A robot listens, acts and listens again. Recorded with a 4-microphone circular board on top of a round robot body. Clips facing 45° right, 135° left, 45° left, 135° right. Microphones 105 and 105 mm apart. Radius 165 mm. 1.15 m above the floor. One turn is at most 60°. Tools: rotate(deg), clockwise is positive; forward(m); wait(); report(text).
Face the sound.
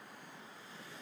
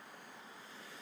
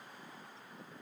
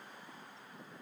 wait()
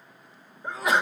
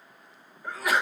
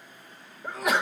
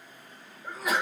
rotate(-20)
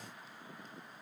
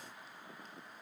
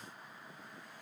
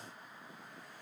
report("I heard a sneeze from this way, but can't make it out now.")